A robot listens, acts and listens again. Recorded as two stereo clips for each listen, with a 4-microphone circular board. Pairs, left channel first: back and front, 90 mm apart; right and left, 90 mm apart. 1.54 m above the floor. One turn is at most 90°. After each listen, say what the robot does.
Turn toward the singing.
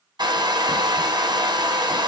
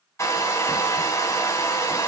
Keep listening.
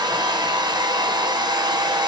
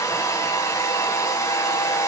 Keep listening.
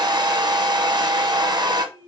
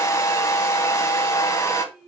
Found it: singing, straight ahead.